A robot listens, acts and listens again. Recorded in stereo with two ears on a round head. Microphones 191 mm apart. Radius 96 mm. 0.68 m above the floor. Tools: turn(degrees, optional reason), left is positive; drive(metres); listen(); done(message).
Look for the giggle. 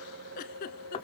turn(degrees=45, reason="The giggle: about 45° left or 135° left.")
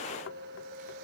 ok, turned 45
listen()
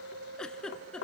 done("Facing the giggle, 1 to 2 m away.")